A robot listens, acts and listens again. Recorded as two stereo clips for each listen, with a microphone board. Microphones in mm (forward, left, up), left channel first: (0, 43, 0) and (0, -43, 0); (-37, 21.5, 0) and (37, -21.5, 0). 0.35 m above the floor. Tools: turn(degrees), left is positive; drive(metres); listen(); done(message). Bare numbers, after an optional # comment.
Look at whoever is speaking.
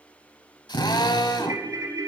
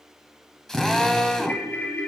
listen()
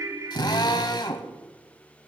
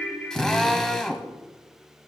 listen()
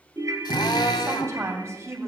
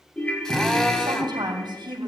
# The woman speaking: 40° right.
turn(-40)
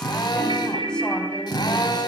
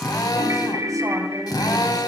listen()
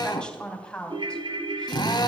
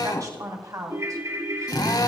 # The woman speaking is now 10° left.
turn(10)
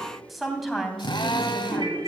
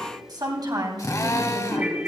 done("Found it: a woman speaking, straight ahead.")